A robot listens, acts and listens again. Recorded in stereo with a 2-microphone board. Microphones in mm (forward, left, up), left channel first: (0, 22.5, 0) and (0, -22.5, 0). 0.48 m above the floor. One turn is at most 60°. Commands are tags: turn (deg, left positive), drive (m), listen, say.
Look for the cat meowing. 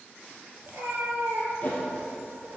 <turn deg="-60"/>
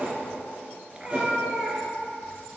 <say>Found it: a cat meowing, straight ahead.</say>